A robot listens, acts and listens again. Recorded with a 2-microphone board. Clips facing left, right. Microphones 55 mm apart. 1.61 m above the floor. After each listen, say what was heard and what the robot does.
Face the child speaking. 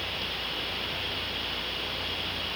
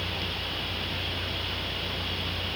Keep listening.
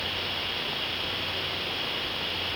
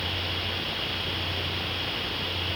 Keep listening.
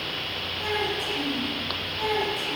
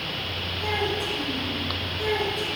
Turn 90° left.
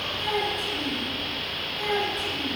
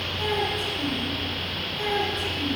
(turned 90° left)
Facing the child speaking, over 4 m away.